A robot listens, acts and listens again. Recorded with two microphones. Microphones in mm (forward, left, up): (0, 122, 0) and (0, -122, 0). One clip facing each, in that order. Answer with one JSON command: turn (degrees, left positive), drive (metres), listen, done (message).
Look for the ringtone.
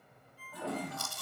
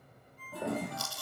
{"turn": 30}
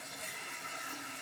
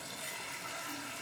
{"listen": true}
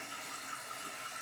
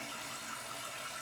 {"listen": true}
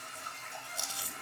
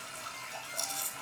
{"done": "I heard a ringtone, but can't make it out now. It was about 25° right or 145° left."}